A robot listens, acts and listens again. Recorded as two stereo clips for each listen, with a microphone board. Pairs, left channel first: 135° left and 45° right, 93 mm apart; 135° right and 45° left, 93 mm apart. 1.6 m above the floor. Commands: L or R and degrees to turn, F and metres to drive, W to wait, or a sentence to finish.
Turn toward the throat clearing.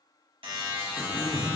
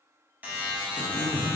L30
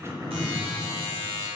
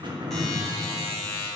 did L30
L10
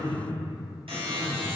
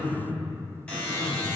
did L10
Found it: throat clearing, straight ahead, 1 to 2 m away.